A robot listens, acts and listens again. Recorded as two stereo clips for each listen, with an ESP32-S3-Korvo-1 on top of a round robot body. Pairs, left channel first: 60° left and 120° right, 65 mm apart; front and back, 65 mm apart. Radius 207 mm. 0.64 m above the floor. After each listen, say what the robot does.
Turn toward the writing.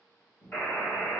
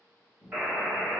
Keep listening.
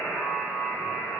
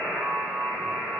Keep listening.
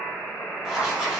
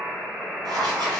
Turn 160° left.
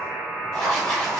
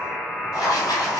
Turn 25° right.
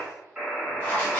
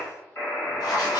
Turn 10° right.
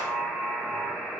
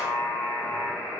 Keep listening.
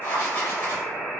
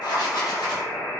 Facing the writing, under 1 m away.